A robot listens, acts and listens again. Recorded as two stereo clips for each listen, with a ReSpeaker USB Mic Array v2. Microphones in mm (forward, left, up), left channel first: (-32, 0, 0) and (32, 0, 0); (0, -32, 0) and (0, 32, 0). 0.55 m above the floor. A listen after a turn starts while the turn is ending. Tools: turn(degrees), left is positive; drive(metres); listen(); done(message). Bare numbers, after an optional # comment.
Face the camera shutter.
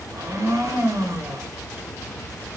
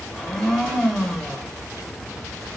listen()
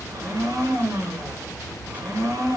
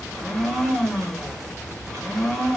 listen()
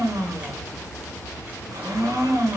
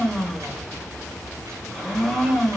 done("I can't make out a camera shutter to turn to.")